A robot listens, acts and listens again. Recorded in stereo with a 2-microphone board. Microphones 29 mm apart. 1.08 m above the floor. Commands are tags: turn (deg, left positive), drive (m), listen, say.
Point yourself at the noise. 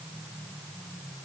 <listen/>
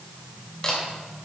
<turn deg="30"/>
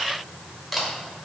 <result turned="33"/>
<say>Found it: a camera shutter, straight ahead.</say>